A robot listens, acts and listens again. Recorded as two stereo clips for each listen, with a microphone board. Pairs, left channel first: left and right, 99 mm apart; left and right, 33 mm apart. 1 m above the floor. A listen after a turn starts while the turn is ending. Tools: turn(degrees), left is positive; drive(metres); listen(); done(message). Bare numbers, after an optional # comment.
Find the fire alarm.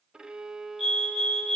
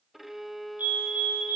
# The fire alarm: about 70° right or 110° right.
turn(-70)
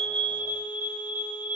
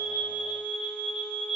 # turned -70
# So it is at 20° right.
turn(-20)
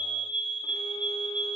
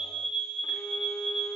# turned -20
done("Facing the fire alarm.")